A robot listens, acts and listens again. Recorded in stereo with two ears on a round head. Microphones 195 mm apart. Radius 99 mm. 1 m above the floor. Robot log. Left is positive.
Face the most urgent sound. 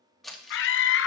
note: The scream: about 60° left or 120° left.
cmd yaw +60
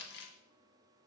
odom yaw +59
cmd idle
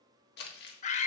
note: So it is at 40° left.
cmd yaw +40
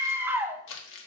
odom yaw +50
note: The scream is now 10° right.
cmd yaw -10
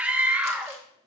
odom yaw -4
end: Facing the scream, under 1 m away.